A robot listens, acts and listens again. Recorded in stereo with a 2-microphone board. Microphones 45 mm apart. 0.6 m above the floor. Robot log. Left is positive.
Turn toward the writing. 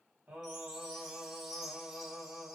cmd idle
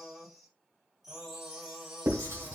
note: The writing: about 75° right or 105° right.
cmd yaw -75
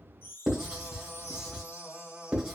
note: So it is at 15° right.
cmd yaw -15
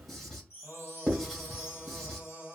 end: Facing the writing.